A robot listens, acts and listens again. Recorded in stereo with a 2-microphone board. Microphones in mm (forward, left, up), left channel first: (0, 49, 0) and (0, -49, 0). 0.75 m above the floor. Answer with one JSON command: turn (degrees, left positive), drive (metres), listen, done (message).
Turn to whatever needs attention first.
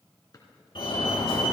{"turn": 60}
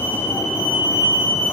{"turn": 45}
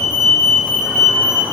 {"done": "Facing the fire alarm, 2 to 4 m away."}